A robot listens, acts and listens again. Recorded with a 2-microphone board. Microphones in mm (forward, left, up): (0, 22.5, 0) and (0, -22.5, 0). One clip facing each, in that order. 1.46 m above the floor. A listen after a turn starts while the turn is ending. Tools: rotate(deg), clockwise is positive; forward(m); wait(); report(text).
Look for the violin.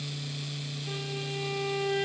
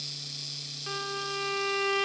rotate(90)
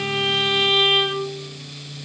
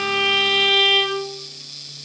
report("Found it: a violin, straight ahead, 2 to 4 m away.")